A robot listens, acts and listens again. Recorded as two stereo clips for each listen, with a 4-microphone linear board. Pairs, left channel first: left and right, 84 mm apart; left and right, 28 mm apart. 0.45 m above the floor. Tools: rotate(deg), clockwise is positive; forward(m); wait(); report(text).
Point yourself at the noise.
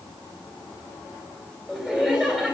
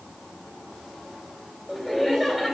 rotate(30)
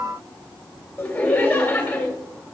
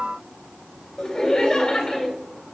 rotate(-20)
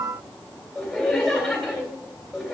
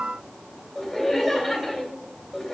report("Facing the laughter, 2 to 4 m away.")